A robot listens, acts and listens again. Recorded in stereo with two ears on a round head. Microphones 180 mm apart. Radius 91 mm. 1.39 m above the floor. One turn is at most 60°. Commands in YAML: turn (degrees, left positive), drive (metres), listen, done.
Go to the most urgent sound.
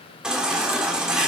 turn: -30
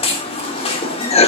turn: 25
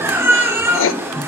turn: -10
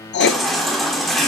drive: 1.0
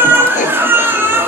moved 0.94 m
turn: -10
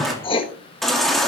drive: 1.0
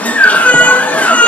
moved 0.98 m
drive: 1.0
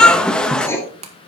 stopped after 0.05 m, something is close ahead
done: "Arrived at the baby crying, straight ahead."